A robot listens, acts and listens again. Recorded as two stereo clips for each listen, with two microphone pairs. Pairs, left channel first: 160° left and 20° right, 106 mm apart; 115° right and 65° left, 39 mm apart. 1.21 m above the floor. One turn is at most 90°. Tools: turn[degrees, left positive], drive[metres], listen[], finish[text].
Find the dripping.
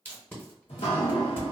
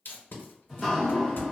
Thought: The dripping: 150° left.
Action: turn[90]
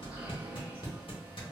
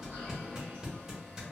Thought: The dripping is now 55° left.
Action: turn[55]
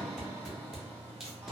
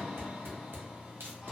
Thought: The dripping is now 15° right.
Action: turn[-15]
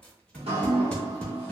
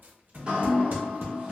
Action: finish[Facing the dripping, under 1 m away.]